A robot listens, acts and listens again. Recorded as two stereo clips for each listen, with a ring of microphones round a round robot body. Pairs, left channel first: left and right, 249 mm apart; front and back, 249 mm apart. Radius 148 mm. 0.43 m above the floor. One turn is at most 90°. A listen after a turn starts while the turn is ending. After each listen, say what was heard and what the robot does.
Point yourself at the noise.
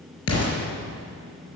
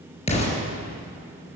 The explosion: 65° left. Turn 65° left.
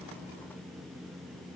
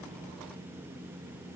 I heard an explosion from this way, but can't make it out now.